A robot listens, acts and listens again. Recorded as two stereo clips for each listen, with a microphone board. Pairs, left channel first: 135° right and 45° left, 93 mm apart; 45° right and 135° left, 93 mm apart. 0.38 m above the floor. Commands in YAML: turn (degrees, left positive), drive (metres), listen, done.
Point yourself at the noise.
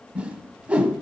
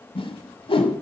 turn: -30
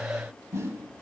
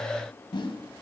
turn: -10
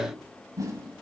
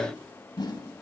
done: "Facing the whoosh."